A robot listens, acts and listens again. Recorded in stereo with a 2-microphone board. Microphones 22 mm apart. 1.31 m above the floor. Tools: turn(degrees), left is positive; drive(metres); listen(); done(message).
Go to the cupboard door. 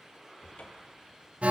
turn(degrees=90)
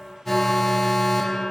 listen()
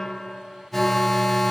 listen()
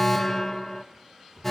turn(degrees=10)
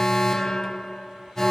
listen()
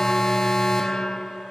listen()
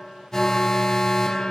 done("I heard a cupboard door from this way, but can't make it out now. I did not reach it.")